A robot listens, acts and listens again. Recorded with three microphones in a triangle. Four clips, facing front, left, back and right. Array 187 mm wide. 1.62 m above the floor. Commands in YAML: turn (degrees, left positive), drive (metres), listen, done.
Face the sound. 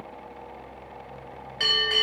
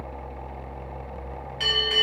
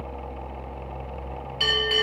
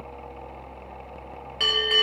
turn: -75
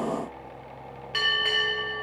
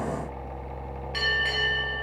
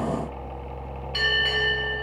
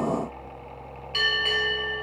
turn: -10
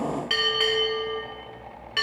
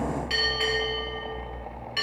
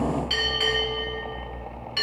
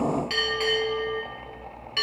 done: "Facing the bell, 1 to 2 m away."